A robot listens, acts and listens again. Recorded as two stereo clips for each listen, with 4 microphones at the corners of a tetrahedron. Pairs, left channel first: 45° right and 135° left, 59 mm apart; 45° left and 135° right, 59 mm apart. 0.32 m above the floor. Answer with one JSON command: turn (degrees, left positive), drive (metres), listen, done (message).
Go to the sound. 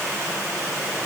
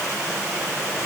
{"listen": true}
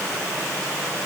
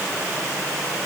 {"listen": true}
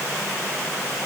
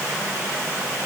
{"done": "I can't make out anything."}